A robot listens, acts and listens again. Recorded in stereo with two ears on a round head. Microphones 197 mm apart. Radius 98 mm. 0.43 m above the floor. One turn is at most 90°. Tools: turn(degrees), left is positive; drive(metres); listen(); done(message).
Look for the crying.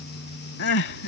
turn(degrees=55)
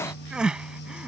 done("Facing the crying.")